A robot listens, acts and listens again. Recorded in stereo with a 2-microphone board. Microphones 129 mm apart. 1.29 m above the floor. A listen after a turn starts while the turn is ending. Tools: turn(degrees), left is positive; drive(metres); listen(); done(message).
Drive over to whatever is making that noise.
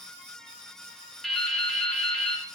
turn(degrees=30)
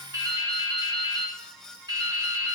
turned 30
turn(degrees=-30)
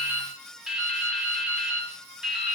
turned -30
drive(metres=1.0)
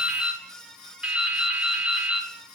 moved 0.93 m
turn(degrees=-10)
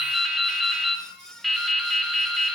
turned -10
drive(metres=1.0)
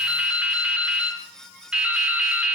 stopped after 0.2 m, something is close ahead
turn(degrees=-10)
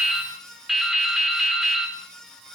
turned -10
done("I am next to the dripping.")